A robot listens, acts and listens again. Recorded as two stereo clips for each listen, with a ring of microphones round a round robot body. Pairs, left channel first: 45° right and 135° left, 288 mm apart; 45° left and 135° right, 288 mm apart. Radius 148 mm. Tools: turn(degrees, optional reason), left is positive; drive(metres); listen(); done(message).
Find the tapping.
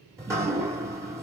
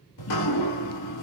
listen()
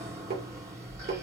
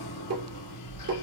turn(degrees=-170, reason="The tapping: 170° right.")
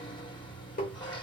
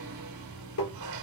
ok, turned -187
turn(degrees=15, reason="The tapping is now 15° left.")
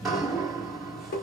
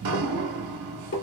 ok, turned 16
done("Facing the tapping.")